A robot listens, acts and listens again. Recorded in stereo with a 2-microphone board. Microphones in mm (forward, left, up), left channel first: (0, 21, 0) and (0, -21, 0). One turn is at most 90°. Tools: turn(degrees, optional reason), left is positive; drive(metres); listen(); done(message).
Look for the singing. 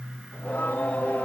turn(degrees=40, reason="The singing: about 40° left or 140° left.")
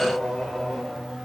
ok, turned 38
done("Facing the singing, 1 to 2 m away.")